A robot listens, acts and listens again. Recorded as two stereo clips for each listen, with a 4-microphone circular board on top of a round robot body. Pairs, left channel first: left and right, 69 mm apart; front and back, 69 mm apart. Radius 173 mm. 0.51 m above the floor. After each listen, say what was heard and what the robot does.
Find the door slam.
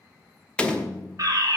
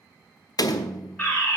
The door slam: 15° left. Turn 15° left.
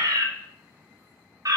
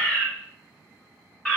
I heard a door slam from this way, but can't make it out now.